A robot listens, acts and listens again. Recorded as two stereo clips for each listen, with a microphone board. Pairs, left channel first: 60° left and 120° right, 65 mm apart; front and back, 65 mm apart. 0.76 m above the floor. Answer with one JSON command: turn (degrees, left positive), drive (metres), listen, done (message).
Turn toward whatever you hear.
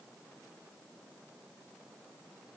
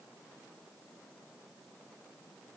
{"listen": true}
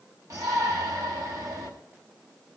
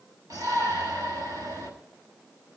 {"turn": -150}
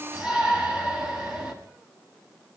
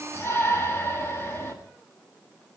{"turn": -45}
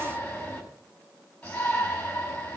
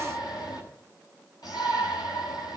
{"turn": -10}
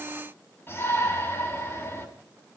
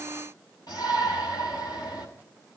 {"done": "Found it: a shout, straight ahead."}